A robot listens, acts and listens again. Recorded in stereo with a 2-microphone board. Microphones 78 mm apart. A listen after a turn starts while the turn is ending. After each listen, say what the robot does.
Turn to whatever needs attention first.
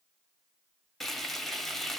Keep listening.
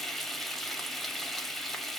Keep listening.
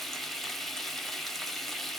I can't make out anything urgent to turn to.